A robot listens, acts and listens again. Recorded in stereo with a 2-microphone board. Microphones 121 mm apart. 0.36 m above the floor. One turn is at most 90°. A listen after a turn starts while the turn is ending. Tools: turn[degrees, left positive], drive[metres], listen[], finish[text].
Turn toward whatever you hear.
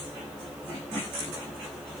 Action: listen[]
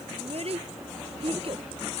Thought: The child speaking: about 50° right or 130° right.
Action: turn[-50]
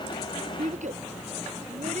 Thought: So it is at 80° right.
Action: turn[-80]
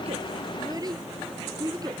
Thought: The child speaking is now 30° right.
Action: turn[-30]
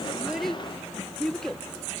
Action: finish[Found it: a child speaking, straight ahead.]